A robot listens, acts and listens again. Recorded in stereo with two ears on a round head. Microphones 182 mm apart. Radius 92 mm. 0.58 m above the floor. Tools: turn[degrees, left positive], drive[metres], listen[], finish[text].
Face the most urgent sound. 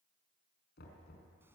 Action: listen[]
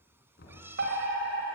Thought: The fire alarm: about 55° right or 125° right.
Action: turn[-55]
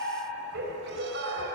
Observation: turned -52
Thought: So it is at 65° right.
Action: turn[-65]
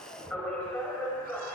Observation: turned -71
Action: finish[Facing the fire alarm.]